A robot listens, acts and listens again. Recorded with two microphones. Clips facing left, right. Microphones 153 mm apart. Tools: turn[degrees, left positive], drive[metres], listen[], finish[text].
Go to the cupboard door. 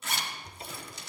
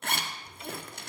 Thought: The cupboard door: about 35° left or 145° left.
Action: turn[35]
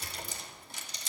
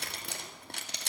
Action: listen[]
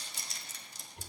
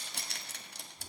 Thought: So it is at 110° left.
Action: turn[110]
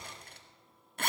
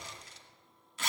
Thought: The cupboard door is now 30° right.
Action: turn[-30]
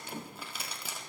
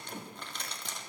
Action: listen[]
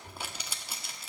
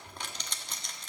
Thought: The cupboard door is now 25° left.
Action: turn[25]
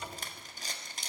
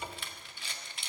Thought: The cupboard door is now 15° right.
Action: turn[-15]
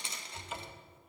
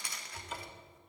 Action: drive[1.0]
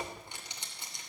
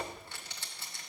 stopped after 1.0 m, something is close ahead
Action: finish[Arrived at the cupboard door, straight ahead.]